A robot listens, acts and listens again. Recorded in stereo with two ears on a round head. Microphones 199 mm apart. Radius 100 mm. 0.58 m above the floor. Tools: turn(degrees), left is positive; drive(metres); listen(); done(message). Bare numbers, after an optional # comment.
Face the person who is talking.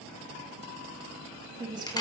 # The woman speaking: about 20° right or 160° right.
turn(-20)
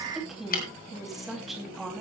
done("Facing the woman speaking, 2 to 4 m away.")